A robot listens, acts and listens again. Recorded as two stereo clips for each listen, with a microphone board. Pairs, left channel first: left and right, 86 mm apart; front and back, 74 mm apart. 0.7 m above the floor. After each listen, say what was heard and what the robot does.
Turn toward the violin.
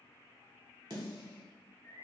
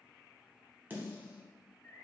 Keep listening.
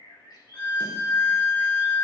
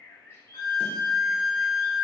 The violin: 15° left. Turn 15° left.
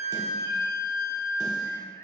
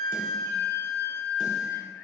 Facing the violin.